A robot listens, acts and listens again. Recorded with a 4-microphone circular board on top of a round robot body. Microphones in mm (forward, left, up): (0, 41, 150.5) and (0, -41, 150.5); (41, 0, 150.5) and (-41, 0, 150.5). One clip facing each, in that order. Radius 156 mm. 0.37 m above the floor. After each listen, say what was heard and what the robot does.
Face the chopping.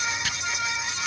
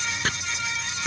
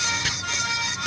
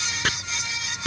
The chopping: 140° right. Turn 140° right.
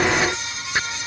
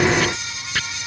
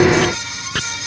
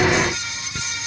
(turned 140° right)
The chopping is now 20° left. Turn 20° left.
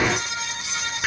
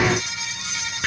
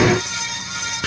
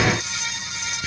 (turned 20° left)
Facing the chopping.